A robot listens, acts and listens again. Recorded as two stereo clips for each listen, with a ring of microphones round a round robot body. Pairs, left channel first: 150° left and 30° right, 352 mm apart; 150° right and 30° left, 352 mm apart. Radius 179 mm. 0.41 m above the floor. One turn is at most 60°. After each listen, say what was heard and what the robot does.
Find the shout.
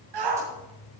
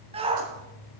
The shout: 45° right. Turn 45° right.
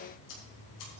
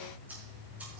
Keep listening.
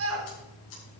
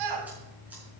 The shout is now 20° left. Turn 20° left.
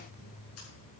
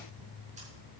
Keep listening.
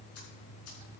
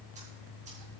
Keep listening.
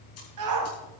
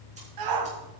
Found it: a shout, straight ahead, 2 to 4 m away.